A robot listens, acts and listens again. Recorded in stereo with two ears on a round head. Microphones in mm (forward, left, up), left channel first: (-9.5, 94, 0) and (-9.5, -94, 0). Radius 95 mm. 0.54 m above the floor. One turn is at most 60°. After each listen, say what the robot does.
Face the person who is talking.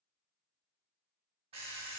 Keep listening.
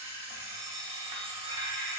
Keep listening.
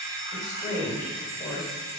Turn 20° left.
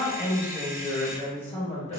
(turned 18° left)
Turn 60° left.
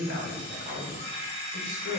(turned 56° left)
Turn 60° left.
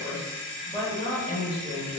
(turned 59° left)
Turn 25° left.
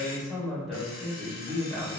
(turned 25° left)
Facing the woman speaking, 1 to 2 m away.